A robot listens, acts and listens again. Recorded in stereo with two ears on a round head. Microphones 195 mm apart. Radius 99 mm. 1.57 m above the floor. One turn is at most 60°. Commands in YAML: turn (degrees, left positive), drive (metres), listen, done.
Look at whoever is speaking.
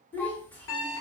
turn: 30
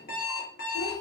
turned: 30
listen: true
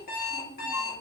turn: 60
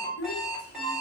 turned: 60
turn: 60
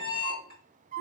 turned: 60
turn: 25
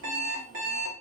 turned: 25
listen: true
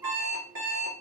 listen: true
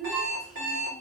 done: "Found it: a child speaking, straight ahead."